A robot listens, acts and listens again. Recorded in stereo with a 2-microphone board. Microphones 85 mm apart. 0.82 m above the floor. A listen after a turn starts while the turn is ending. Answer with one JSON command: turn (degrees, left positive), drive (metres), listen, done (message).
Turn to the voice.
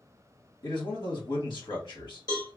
{"turn": 65}
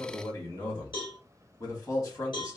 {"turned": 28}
{"turn": 45}
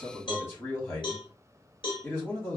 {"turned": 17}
{"turn": 30}
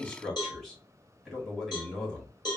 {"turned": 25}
{"done": "Facing the man speaking, 1 to 2 m away."}